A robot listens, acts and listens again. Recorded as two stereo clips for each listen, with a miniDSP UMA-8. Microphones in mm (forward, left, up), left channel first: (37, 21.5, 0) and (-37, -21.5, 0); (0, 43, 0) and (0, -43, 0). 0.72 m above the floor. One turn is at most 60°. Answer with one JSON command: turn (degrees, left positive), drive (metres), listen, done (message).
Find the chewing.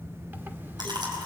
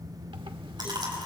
{"turn": -60}
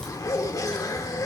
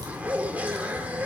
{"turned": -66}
{"turn": -55}
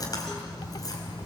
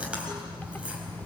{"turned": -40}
{"turn": -15}
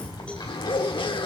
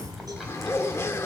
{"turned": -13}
{"listen": true}
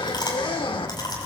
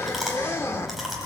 {"done": "Facing the chewing, over 4 m away."}